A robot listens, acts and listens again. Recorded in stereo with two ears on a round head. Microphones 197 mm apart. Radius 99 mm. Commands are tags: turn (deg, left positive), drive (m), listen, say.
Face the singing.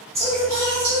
<turn deg="-30"/>
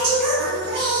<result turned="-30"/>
<turn deg="-115"/>
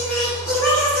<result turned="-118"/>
<say>Found it: singing, straight ahead.</say>